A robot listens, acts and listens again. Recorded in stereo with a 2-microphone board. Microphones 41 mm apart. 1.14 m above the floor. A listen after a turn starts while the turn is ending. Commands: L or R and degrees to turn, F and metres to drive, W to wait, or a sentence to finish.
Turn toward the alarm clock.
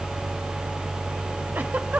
W
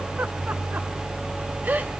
W
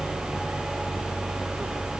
I can't make out an alarm clock to turn to.